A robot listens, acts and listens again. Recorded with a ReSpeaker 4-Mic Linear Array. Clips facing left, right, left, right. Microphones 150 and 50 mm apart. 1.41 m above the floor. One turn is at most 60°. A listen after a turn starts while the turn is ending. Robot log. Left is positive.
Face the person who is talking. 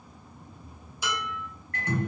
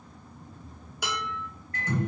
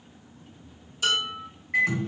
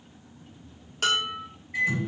cmd idle
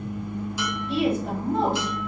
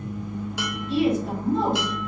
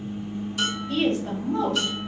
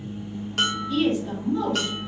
note: The woman speaking: about 60° left or 120° left.
cmd yaw +60
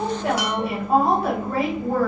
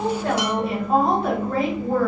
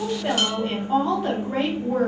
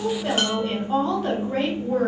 end: Facing the woman speaking.